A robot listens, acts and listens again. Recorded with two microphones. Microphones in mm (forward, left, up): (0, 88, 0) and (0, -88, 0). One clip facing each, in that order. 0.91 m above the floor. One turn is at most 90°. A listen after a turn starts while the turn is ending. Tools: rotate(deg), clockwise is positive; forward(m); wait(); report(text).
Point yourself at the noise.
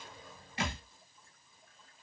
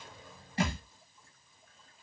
rotate(35)
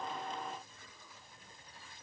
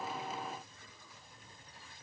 wait()
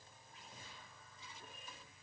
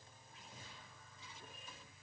report("I heard a thud, but can't make it out now. It was about straight ahead or 110° right.")